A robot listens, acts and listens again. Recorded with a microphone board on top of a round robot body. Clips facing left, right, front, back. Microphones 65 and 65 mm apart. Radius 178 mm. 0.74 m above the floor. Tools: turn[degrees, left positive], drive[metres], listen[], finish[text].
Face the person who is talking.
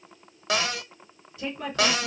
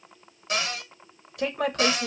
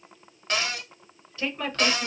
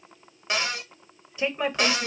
Thought: The woman speaking: 110° right.
Action: turn[-110]
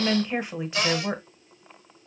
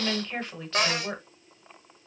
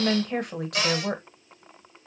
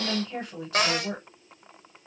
Thought: The woman speaking is now 15° left.
Action: turn[15]
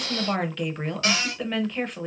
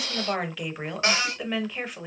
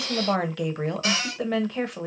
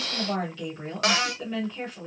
Action: finish[Facing the woman speaking.]